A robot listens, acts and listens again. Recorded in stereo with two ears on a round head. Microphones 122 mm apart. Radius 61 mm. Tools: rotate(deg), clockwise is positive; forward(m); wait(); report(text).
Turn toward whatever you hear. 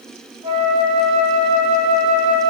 rotate(35)
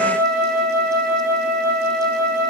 rotate(105)
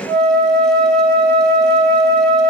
report("Facing the flute, 2 to 4 m away.")